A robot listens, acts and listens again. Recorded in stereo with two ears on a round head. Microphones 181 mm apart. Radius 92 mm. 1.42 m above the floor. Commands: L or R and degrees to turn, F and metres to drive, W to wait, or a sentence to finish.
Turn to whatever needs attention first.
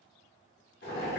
W
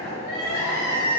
L55
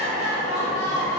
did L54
L70
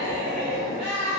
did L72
Found it: crying, straight ahead, 1 to 2 m away.